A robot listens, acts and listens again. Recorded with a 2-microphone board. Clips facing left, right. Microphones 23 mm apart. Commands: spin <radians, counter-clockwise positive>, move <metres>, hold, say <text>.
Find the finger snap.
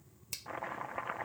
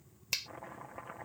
spin -0.79
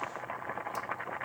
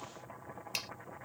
hold
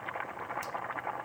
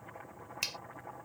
spin -1.57
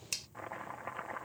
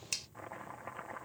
say Found it: a finger snap, straight ahead.